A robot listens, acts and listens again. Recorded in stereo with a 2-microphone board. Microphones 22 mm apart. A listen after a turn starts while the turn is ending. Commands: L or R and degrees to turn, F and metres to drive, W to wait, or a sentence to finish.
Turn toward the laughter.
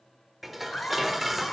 L65
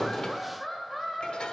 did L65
Facing the laughter.